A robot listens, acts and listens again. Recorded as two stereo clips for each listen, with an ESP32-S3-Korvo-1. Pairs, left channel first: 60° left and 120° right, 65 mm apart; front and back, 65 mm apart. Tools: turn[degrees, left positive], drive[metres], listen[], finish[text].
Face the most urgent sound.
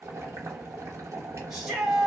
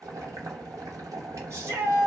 Thought: The shout: 155° left.
Action: turn[155]
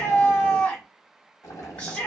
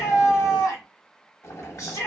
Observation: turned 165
Thought: The shout is now 10° right.
Action: turn[-10]
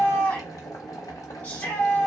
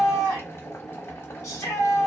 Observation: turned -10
Action: finish[Found it: a shout, straight ahead, 1 to 2 m away.]